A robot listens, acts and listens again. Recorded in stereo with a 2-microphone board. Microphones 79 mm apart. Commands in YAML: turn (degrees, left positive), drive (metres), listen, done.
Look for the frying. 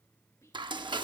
turn: -90
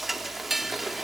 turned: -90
done: "Found it: frying, straight ahead, under 1 m away."